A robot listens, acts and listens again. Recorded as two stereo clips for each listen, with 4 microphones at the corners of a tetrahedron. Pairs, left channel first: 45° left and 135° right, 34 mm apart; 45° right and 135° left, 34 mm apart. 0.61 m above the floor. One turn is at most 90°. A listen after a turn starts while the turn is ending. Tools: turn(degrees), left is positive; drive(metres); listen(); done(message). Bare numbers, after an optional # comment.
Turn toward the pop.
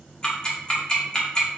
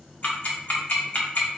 listen()
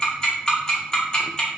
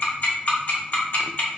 listen()
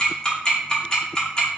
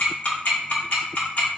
done("I can't make out a pop, only ticking.")